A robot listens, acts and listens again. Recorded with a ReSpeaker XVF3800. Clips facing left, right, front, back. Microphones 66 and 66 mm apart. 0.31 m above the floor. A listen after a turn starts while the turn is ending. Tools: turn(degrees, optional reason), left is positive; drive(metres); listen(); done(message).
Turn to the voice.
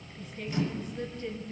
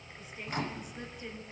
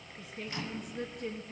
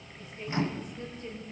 turn(degrees=-15, reason="The woman speaking: 15° right.")
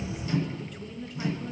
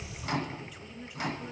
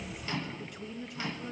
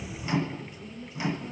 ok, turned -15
turn(degrees=-10, reason="The woman speaking is now 10° right.")
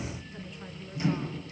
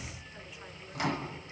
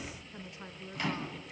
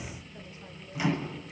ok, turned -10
done("Found it: a woman speaking, straight ahead, 2 to 4 m away.")